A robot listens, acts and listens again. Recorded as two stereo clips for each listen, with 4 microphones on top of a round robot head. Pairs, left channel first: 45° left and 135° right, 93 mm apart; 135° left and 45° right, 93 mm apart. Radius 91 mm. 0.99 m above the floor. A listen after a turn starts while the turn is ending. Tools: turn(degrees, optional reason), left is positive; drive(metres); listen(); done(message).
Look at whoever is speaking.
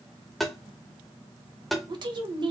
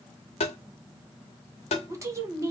turn(degrees=-105, reason="The woman speaking: 105° right.")
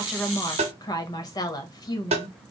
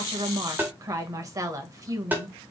done("Facing the woman speaking.")